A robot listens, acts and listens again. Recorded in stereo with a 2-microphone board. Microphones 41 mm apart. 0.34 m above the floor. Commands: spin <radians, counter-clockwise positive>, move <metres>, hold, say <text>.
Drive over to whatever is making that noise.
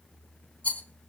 spin 0.61
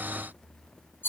spin 1.83
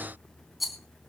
move 1.0
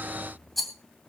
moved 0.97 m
move 1.0
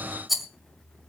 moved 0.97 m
move 1.0
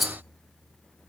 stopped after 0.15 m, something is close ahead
say I am next to the rattle.